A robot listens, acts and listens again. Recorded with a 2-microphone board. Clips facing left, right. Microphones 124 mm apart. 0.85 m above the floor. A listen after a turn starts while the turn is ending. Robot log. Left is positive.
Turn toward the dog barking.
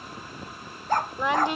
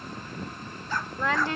note: The dog barking: about 50° left or 130° left.
cmd yaw +50
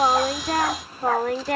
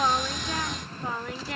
cmd idle
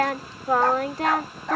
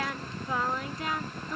note: So it is at 80° left.
cmd yaw +80
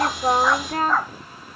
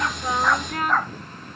end: Found it: a dog barking, straight ahead.